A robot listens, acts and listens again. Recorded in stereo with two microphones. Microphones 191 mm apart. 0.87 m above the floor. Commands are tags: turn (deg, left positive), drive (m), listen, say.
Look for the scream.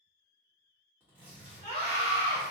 <turn deg="30"/>
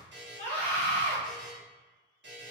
<turn deg="10"/>
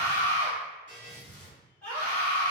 <say>Found it: a scream, straight ahead.</say>